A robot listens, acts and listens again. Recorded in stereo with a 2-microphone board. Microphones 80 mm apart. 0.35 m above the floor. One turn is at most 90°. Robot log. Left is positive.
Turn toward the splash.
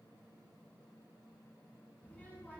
cmd idle
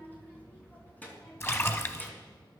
note: The splash: about 30° left or 150° left.
cmd yaw +30
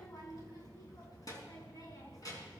cmd idle
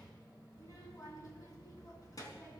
end: I heard a splash, but can't make it out now. It was about straight ahead or 120° left.